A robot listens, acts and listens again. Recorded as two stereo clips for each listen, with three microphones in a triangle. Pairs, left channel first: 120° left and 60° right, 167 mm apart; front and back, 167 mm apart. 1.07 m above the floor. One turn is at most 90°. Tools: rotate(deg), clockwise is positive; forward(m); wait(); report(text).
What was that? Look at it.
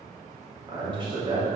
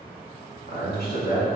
report("Found it: a man speaking, straight ahead, 1 to 2 m away.")